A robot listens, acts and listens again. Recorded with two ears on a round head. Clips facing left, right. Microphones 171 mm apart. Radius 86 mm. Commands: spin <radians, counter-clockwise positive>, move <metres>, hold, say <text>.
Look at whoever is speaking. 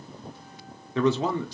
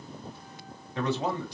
spin 1.05
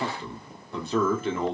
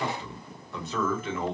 spin 0.52
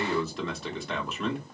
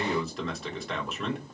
say Found it: a man speaking, straight ahead, 1 to 2 m away.